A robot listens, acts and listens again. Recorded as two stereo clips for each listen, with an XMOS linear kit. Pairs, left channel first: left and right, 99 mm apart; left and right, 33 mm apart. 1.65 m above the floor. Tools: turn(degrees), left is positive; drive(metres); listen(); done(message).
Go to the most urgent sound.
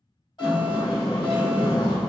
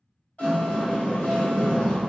turn(degrees=55)
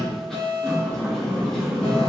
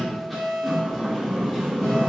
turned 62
turn(degrees=65)
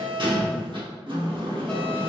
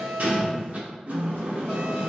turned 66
drive(metres=1.0)
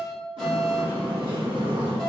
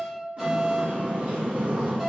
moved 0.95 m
drive(metres=1.0)
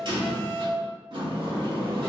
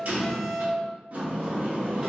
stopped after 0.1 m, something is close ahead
done("Arrived at the alarm, straight ahead.")